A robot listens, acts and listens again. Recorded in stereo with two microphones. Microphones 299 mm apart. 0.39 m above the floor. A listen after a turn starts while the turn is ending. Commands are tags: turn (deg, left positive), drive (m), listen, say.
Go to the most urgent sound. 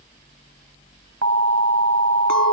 <turn deg="-65"/>
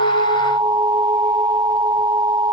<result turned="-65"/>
<turn deg="-15"/>
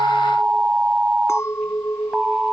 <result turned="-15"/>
<drive m="1.0"/>
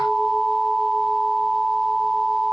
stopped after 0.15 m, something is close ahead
<say>Something is in my way. I am facing the alarm but have not reached it.</say>